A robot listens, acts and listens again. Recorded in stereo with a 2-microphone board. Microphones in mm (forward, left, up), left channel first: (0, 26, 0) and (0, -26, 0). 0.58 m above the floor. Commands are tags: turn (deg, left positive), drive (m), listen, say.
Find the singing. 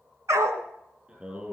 <turn deg="-20"/>
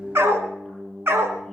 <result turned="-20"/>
<say>Facing the singing, over 4 m away.</say>